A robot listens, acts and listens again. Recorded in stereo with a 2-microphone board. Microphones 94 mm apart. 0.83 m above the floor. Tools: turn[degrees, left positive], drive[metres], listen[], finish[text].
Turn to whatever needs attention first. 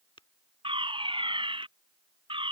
Thought: The fire alarm: about 65° right or 115° right.
Action: turn[-65]
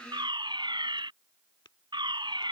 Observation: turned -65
Thought: So it is at 55° right.
Action: turn[-55]
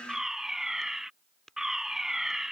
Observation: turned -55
Action: finish[Found it: a fire alarm, straight ahead.]